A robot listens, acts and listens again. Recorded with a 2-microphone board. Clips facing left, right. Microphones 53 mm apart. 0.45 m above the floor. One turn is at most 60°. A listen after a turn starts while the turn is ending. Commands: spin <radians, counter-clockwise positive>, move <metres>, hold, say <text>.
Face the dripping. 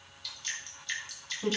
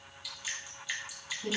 spin -0.52
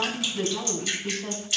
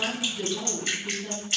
spin -1.05
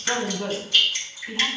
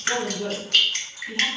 spin -1.05
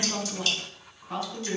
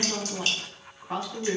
spin -0.79
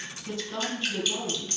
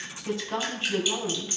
spin -0.26
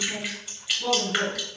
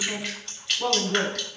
say Found it: dripping, straight ahead.